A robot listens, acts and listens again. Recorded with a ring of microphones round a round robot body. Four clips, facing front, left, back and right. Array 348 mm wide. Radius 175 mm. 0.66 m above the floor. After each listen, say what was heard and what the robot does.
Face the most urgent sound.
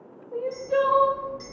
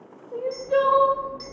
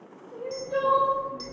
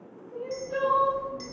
The crying: 55° left. Turn 55° left.
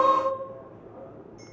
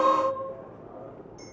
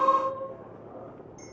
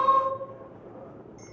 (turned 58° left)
Found it: crying, straight ahead, under 1 m away.